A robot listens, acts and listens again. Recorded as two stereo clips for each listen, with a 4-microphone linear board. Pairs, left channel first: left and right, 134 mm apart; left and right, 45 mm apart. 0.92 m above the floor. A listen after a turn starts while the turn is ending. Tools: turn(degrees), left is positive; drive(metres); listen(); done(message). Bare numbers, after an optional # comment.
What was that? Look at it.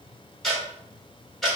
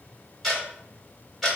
turn(30)
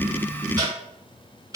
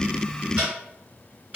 # So it is at 30° right.
turn(-30)
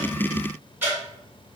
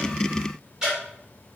# The ticking is now 15° right.
turn(-15)
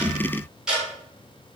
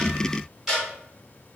done("Found it: ticking, straight ahead.")